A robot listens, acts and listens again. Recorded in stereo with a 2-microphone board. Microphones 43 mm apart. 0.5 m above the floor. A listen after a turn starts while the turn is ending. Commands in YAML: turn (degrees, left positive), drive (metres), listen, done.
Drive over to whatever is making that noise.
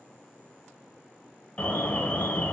turn: 30
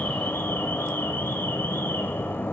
turn: 115
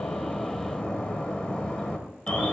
turn: 25
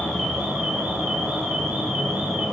turn: -15
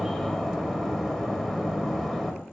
drive: 1.0
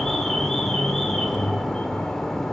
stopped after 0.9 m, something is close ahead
turn: 10
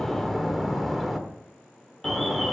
done: "Arrived at the alarm, straight ahead."